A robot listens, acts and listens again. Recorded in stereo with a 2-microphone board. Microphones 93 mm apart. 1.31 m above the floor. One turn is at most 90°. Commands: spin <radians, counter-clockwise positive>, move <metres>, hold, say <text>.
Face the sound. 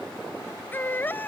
spin 0.35
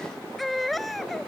say Found it: a baby crying, straight ahead.